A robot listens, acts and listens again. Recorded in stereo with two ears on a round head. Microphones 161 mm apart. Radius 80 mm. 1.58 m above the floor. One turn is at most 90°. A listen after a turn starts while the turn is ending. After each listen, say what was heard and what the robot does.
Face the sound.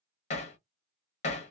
The hammering: about 40° left or 140° left. Turn 40° left.
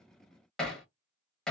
Facing the hammering, 1 to 2 m away.